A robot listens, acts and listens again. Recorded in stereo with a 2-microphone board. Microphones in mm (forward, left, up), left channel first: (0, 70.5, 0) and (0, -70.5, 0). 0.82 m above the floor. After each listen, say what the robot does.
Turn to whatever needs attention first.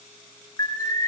Turn 25° left.
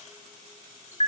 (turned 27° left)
Turn 120° left.
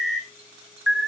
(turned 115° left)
Found it: an alarm, straight ahead, 1 to 2 m away.